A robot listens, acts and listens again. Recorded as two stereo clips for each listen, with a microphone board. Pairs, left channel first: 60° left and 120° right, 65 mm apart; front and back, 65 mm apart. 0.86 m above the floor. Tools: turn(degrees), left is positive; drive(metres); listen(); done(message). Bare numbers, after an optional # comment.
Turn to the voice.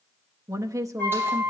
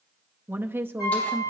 # The woman speaking: 130° right.
turn(-130)
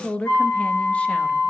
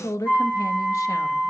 # The woman speaking is now 10° right.
turn(-10)
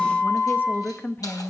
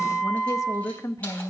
done("Facing the woman speaking.")